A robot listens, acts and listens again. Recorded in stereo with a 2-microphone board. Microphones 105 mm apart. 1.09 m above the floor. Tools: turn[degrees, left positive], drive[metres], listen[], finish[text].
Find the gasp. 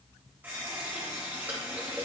Action: listen[]
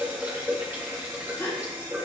Thought: The gasp: about 25° left or 155° left.
Action: turn[25]
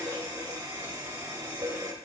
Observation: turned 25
Action: listen[]
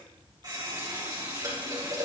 Action: finish[I heard a gasp, but can't make it out now. It was about straight ahead or 130° left.]